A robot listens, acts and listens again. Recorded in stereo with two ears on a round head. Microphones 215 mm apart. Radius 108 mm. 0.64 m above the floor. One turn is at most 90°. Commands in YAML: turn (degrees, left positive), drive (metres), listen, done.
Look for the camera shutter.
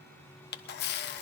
turn: 45
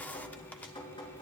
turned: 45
turn: 10
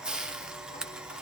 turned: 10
done: "Found it: a camera shutter, straight ahead."